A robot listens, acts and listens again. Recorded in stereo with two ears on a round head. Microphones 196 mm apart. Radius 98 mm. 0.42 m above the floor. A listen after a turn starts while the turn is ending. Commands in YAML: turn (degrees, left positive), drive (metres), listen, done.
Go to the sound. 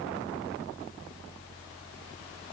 listen: true
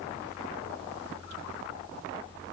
listen: true
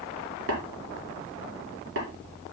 turn: -65
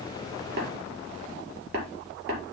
turn: -50
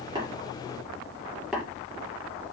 drive: 1.0
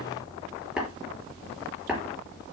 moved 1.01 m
drive: 1.0
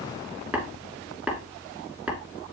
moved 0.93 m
drive: 1.0
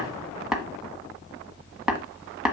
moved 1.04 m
drive: 1.0
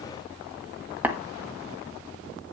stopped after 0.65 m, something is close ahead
turn: -10
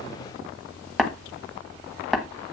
done: "Arrived at the tapping, straight ahead."